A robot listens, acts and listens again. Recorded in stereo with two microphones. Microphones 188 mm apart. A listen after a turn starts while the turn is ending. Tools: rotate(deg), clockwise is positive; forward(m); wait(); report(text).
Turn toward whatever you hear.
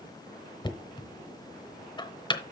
rotate(-25)
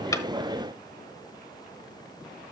wait()
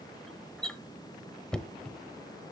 report("Facing the knocking, under 1 m away.")